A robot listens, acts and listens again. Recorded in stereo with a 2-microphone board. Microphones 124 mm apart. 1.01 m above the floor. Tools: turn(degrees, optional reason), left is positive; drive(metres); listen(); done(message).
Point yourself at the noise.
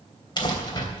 turn(degrees=35, reason="The crumpling: about 35° left or 145° left.")
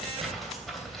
done("Found it: crumpling, straight ahead, 2 to 4 m away.")